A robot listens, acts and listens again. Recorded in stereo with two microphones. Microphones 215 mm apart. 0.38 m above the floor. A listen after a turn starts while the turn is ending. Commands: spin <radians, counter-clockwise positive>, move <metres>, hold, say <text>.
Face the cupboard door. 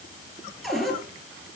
spin 0.52
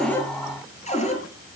spin 2.62
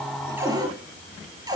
spin -0.26
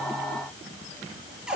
say Facing the cupboard door, over 4 m away.